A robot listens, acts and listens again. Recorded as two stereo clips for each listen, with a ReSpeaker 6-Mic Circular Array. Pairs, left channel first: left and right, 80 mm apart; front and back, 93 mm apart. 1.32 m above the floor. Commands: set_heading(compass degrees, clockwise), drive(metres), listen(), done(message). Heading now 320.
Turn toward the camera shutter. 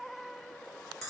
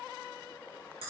listen()
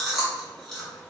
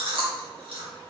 listen()
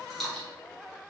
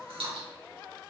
done("I can't make out a camera shutter to turn to.")